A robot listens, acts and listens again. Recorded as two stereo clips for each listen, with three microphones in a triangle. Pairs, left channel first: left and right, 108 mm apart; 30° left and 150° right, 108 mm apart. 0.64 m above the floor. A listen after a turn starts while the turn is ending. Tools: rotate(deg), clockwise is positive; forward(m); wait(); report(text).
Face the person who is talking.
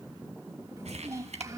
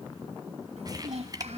rotate(150)
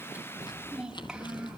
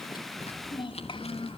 report("Found it: a child speaking, straight ahead, 2 to 4 m away.")